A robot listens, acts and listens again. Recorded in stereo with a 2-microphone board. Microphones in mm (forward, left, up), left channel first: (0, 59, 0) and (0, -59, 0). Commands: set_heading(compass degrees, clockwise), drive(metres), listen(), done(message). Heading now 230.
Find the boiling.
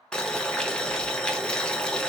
set_heading(200)
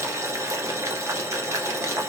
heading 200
set_heading(225)
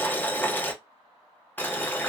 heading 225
set_heading(210)
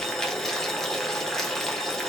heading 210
done("Facing the boiling.")